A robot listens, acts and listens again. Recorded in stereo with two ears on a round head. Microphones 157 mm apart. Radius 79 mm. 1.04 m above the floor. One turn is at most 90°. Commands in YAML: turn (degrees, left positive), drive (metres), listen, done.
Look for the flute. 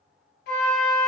turn: 60
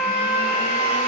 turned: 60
turn: 65
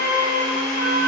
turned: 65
turn: 10
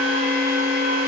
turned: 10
listen: true
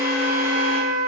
done: "Facing the flute, 1 to 2 m away."